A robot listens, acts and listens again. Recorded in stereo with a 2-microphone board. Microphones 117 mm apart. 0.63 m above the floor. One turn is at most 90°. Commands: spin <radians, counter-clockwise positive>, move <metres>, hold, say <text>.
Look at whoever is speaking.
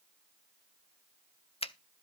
hold
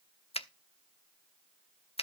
hold
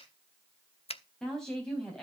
spin 0.52
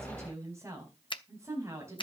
spin -0.44
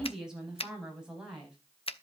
say Facing the woman speaking, over 4 m away.